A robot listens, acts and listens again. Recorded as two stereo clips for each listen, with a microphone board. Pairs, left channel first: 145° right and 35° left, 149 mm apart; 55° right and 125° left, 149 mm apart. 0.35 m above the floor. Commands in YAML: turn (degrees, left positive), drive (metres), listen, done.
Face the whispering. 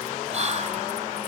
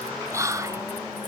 turn: 60
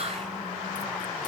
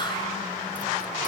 listen: true
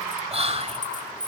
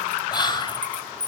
done: "Found it: whispering, straight ahead, 1 to 2 m away."